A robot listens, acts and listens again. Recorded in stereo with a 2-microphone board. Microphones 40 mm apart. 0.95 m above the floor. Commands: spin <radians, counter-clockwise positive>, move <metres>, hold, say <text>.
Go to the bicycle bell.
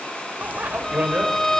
spin -0.79
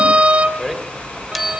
move 1.0
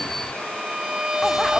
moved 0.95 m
move 1.0
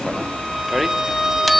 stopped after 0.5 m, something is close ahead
say I am next to the bicycle bell.